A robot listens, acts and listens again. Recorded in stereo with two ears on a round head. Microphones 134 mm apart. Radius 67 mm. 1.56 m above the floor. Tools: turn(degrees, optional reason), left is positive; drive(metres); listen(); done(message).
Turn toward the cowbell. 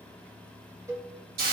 turn(degrees=-20, reason="The cowbell: about 20° right or 160° right.")
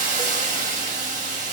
listen()
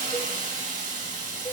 listen()
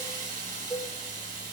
done("Found it: a cowbell, straight ahead.")